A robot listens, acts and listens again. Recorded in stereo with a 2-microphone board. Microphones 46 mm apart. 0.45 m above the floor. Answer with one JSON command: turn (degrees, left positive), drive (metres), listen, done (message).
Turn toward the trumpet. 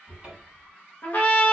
{"turn": 40}
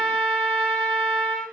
{"done": "Facing the trumpet, under 1 m away."}